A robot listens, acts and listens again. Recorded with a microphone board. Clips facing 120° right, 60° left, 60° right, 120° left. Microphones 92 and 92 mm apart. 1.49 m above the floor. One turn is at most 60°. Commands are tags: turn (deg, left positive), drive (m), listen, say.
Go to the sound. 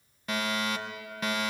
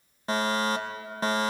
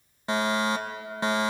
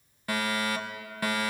<drive m="1.0"/>
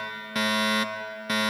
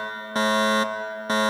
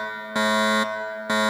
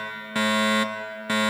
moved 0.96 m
<drive m="1.0"/>
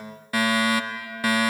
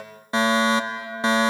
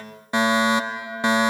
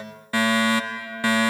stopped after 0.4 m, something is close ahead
<say>Arrived at the fire alarm, straight ahead.</say>